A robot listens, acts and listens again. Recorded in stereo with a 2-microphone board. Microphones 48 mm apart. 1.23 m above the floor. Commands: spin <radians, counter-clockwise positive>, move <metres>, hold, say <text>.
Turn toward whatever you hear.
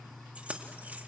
spin -0.52
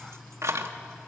spin -1.75
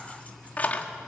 spin 0.61
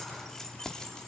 spin 0.26
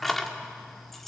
say Found it: keys jangling, straight ahead, 2 to 4 m away.